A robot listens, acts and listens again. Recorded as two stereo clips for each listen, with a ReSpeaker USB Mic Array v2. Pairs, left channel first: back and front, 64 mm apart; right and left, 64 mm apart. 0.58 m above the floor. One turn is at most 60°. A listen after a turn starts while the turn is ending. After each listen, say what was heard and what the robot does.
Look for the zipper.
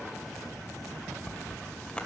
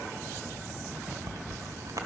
The zipper: 105° left. Turn 60° left.
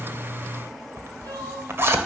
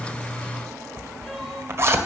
The zipper is now 45° left. Turn 45° left.
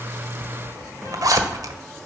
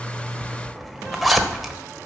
Facing the zipper, 1 to 2 m away.